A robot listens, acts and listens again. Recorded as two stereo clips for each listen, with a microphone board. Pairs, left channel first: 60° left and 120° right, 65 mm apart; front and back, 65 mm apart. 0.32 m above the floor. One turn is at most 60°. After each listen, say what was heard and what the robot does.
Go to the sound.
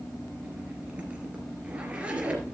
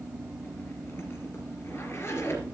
The zipper: 50° right. Turn 50° right.
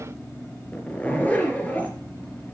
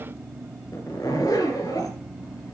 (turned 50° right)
Drive 1.0 m forward.
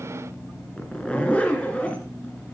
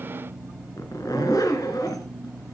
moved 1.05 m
The zipper is now 10° right. Turn 10° right.
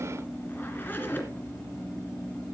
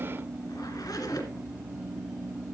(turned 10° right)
Drive 1.0 m forward.
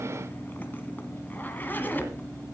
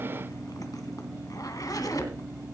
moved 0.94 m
Drive 1.0 m forward.
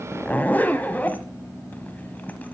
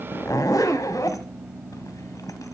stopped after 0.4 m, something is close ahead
Arrived at the zipper, straight ahead.